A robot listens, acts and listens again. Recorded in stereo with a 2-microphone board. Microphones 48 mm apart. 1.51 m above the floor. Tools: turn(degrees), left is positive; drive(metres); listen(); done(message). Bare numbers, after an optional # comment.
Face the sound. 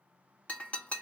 # The breaking glass: about 30° left or 150° left.
turn(30)
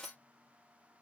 done("Facing the breaking glass.")